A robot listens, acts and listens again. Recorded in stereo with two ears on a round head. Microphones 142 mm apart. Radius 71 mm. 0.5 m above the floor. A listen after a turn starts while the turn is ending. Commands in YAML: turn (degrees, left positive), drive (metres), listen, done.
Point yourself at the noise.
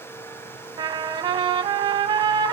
turn: -30
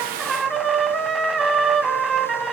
done: "Found it: a trumpet, straight ahead, 1 to 2 m away."